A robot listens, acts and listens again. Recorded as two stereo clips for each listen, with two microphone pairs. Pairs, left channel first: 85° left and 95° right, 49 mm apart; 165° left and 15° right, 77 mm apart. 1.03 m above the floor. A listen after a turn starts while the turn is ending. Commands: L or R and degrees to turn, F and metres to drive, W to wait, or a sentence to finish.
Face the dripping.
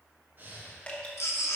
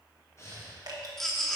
L20
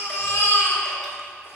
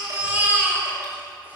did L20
W
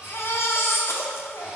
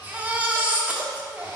W
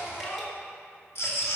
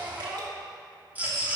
Facing where the dripping came from. I can't hear it now.